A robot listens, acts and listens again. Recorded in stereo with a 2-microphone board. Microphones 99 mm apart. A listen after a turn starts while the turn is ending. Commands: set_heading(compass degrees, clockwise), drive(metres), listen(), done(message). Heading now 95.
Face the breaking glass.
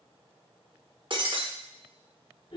set_heading(145)
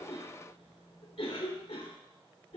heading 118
listen()
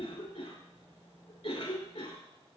done("I heard breaking glass, but can't make it out now. It was about 30° right or 105° right.")